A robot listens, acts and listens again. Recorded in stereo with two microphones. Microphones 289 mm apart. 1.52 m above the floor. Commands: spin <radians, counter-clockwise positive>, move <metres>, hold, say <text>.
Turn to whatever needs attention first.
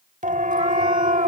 spin -0.44
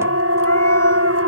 spin -2.18
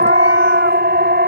spin -0.61
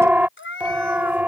say Facing the siren.